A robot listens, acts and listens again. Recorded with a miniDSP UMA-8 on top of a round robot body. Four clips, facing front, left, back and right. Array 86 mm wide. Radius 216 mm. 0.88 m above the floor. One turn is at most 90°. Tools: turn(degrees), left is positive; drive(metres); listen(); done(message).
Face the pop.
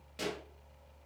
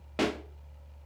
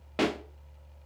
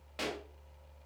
turn(degrees=90)
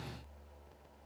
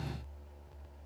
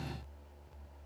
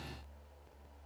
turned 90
turn(degrees=60)
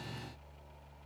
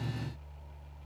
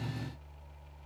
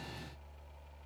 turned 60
done("I heard a pop from this way, but can't make it out now.")